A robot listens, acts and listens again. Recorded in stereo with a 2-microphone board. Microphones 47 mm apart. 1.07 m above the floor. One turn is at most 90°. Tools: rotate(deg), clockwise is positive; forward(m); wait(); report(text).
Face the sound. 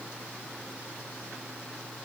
wait()
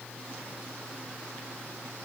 wait()
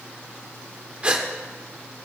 rotate(25)
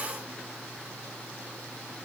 wait()
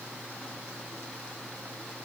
report("I heard a gasp, but can't make it out now. It was about straight ahead or 130° right.")